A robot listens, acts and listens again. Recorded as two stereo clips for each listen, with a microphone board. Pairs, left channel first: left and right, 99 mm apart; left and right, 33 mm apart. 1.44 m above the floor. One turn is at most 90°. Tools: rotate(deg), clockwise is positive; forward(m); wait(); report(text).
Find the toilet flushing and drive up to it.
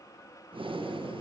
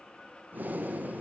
wait()
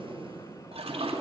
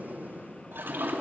rotate(90)
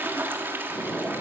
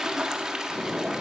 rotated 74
rotate(20)
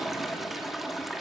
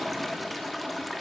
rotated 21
forward(1.0)
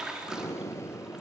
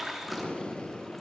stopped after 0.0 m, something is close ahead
report("Something is in my way. I am facing the toilet flushing but have not reached it.")